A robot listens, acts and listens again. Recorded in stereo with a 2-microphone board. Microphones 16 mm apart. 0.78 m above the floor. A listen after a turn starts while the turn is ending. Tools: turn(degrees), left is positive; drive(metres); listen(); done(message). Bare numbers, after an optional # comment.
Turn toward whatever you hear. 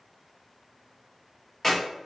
turn(30)
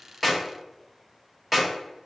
# So it is at 20° right.
turn(-20)
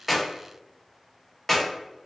done("Facing the clap, 1 to 2 m away.")